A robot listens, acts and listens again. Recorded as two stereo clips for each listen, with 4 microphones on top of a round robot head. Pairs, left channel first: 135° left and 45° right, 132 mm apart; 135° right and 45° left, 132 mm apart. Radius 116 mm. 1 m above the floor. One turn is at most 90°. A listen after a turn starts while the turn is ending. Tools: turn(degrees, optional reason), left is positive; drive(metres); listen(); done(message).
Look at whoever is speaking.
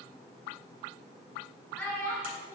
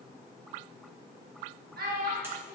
turn(degrees=60, reason="The child speaking: 60° left.")
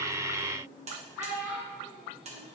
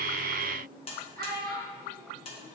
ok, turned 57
turn(degrees=35, reason="The child speaking is now 35° left.")
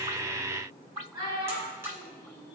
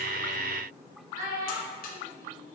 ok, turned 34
turn(degrees=15, reason="The child speaking is now 15° left.")
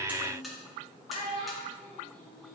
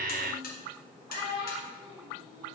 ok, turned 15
done("Facing the child speaking.")